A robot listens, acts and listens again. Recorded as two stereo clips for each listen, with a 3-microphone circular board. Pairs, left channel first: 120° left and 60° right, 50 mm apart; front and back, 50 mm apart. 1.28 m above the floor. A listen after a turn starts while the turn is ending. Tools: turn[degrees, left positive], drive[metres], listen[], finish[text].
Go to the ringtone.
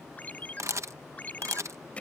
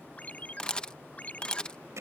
Thought: The ringtone: 60° left.
Action: turn[60]
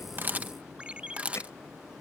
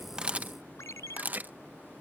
Action: drive[1.0]
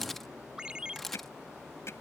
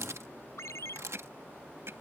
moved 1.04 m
Thought: The ringtone is now 10° left.
Action: turn[10]
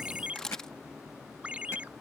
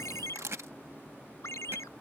Action: drive[1.0]
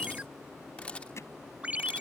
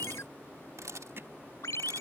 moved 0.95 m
Action: drive[1.0]
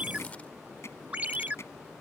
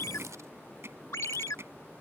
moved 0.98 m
Action: drive[1.0]
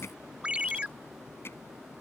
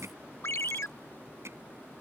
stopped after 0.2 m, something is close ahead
Action: finish[I am next to the ringtone.]